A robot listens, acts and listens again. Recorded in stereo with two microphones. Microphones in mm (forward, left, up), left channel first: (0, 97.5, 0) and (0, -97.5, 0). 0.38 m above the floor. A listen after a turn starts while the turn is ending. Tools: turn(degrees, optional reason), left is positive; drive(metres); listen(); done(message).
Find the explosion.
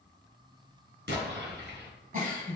turn(degrees=-65, reason="The explosion: about 65° right or 115° right.")
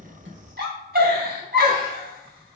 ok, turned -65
listen()
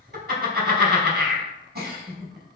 done("I heard an explosion, but can't make it out now. It was about straight ahead or 50° right.")